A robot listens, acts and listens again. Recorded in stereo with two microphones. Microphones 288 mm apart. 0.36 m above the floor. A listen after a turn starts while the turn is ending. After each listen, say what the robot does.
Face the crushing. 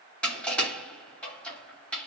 Turn 30° left.
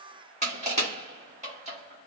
Turn 25° right.
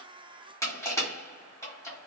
Turn 10° left.
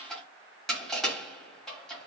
Facing the crushing.